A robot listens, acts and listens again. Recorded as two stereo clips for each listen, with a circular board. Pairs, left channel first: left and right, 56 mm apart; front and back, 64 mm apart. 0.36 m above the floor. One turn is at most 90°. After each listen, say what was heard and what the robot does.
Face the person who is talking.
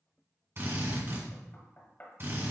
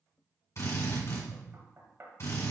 Keep listening.
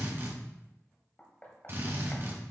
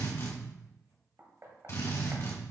Keep listening.
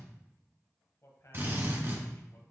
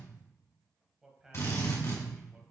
The man speaking: 100° left. Turn 90° left.
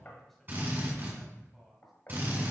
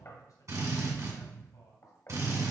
Found it: a man speaking, straight ahead, 1 to 2 m away.